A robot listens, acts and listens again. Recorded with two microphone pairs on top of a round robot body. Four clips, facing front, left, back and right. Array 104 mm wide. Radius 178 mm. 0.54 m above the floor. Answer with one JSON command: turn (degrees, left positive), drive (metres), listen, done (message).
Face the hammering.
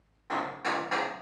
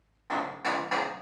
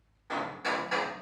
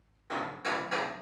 {"turn": 85}
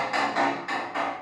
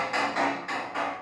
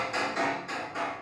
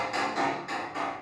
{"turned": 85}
{"turn": 10}
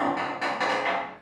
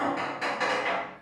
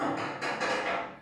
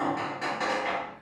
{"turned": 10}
{"done": "Found it: hammering, straight ahead."}